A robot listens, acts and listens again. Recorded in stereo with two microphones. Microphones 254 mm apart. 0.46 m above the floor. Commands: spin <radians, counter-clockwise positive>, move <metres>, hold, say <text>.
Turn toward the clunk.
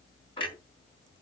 spin 0.35
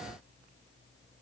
hold
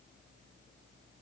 say I heard a clunk, but can't make it out now. It was about straight ahead or 140° left.